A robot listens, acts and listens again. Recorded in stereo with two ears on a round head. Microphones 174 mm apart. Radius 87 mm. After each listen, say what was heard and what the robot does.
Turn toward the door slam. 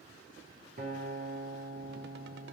Keep listening.
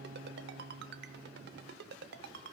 Keep listening.
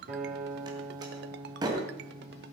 The door slam: about 20° right or 160° right. Turn 20° right.
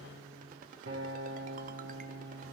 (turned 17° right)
Keep listening.
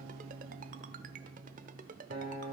I heard a door slam, but can't make it out now. It was about 5° right or 140° right.